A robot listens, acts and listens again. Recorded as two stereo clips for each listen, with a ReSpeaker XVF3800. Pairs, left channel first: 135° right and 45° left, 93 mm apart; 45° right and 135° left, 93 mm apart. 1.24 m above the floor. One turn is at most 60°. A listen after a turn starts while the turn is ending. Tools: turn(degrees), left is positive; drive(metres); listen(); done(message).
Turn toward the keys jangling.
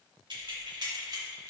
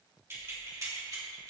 turn(degrees=60)
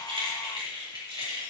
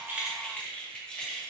turn(degrees=40)
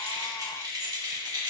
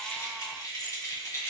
turn(degrees=10)
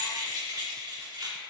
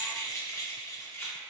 turn(degrees=15)
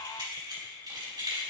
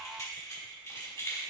turn(degrees=10)
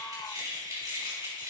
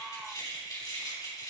done("Found it: keys jangling, straight ahead.")